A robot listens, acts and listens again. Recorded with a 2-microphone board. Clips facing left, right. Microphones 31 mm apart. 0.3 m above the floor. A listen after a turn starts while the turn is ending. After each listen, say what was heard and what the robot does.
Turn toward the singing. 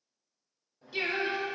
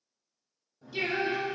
The singing: about 25° left or 155° left. Turn 25° left.
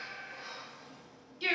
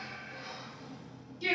So it is at 130° left. Turn 130° left.
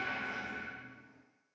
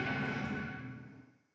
Keep listening.
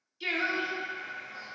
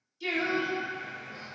The singing is now 35° left. Turn 35° left.
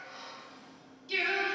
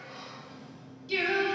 Facing the singing.